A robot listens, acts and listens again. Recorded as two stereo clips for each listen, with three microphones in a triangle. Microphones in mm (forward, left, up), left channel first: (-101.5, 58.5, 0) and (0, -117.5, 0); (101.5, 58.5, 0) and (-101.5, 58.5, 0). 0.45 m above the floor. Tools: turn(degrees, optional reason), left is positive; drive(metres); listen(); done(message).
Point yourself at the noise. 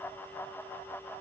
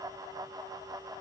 listen()
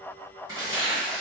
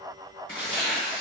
turn(degrees=10, reason="The tearing paper: 10° left.")
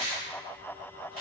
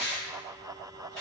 done("Found it: tearing paper, straight ahead.")